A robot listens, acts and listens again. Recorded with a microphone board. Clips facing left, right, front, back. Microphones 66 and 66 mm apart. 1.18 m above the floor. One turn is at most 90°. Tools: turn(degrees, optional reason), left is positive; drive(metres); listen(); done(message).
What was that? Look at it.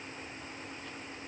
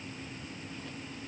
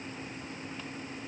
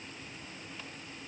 listen()
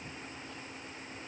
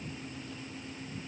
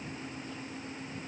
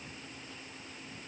listen()
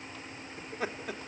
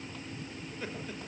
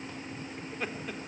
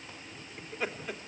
turn(degrees=90, reason="The laughter: 90° left.")
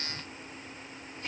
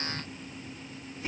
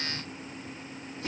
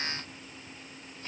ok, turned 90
done("Facing the laughter, 2 to 4 m away.")